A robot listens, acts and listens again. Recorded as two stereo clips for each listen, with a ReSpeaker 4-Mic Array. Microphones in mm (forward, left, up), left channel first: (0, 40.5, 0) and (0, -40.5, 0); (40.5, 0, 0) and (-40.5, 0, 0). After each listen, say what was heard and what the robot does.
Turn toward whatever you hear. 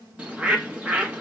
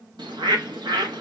The bird: 165° right. Turn 165° right.
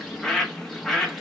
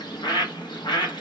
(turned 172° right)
Found it: a bird, straight ahead, 1 to 2 m away.